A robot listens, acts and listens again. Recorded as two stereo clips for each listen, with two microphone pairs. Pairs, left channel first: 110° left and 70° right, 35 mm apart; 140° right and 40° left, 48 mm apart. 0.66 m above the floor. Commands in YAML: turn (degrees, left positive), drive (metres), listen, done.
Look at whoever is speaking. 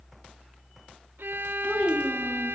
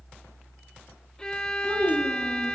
turn: 50
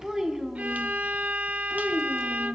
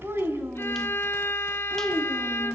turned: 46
done: "Found it: a child speaking, straight ahead, 2 to 4 m away."